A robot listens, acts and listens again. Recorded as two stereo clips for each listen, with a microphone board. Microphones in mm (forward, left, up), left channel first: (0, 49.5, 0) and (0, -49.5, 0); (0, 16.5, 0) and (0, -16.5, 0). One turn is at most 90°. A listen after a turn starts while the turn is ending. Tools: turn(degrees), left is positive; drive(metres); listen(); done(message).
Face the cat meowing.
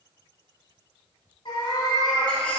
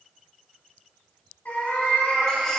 turn(degrees=40)
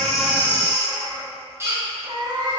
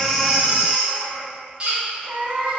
turn(degrees=-50)
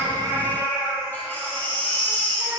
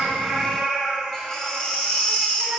turn(degrees=-20)
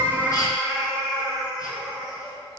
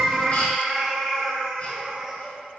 turn(degrees=-10)
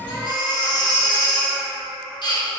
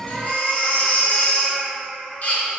done("Found it: a cat meowing, straight ahead.")